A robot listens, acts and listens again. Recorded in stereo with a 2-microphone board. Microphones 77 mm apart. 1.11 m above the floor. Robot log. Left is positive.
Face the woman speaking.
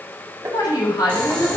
note: The woman speaking: about 60° left or 120° left.
cmd yaw +60
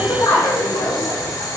note: So it is at 70° left.
cmd yaw +70
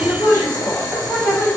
note: The woman speaking is now 40° left.
cmd yaw +40
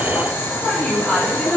end: Found it: a woman speaking, straight ahead.